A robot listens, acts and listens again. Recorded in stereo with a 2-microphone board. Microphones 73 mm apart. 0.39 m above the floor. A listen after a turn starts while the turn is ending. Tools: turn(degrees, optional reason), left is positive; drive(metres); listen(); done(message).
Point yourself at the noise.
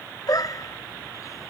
turn(degrees=55, reason="The dog barking: about 55° left or 125° left.")
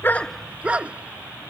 turn(degrees=-15, reason="So it is at 15° right.")
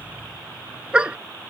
turn(degrees=-15, reason="The dog barking is now 15° right.")
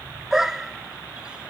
done("Found it: a dog barking, straight ahead.")